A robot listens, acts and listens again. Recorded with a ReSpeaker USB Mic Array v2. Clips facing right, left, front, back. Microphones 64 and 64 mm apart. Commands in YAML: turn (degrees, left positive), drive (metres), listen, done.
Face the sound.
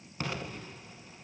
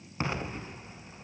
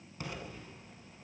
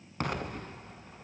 turn: 155
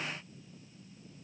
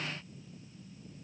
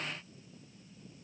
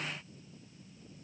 done: "Facing where the explosion came from. I can't hear it now."